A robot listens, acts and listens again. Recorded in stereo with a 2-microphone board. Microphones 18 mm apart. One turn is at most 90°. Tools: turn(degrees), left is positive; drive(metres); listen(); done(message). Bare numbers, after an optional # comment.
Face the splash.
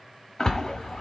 # The splash: about 30° left or 150° left.
turn(30)
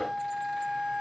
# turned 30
listen()
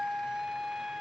done("I heard a splash, but can't make it out now. It was about straight ahead or 120° left.")